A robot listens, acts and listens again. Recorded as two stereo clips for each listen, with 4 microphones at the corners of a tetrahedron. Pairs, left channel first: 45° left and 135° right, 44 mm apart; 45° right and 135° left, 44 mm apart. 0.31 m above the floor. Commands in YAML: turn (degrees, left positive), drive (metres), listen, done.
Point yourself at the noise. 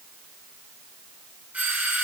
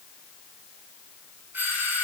turn: 170
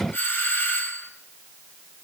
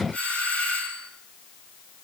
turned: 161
turn: 10
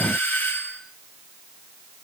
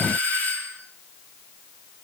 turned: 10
done: "Found it: a doorbell, straight ahead."